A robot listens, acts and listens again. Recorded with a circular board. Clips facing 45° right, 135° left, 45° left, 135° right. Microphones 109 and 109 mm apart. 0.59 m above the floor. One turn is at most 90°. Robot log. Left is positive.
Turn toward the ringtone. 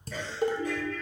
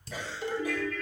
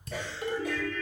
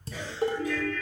note: The ringtone: 15° left.
cmd yaw +15
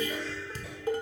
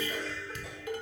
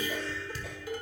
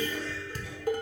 end: Found it: a ringtone, straight ahead.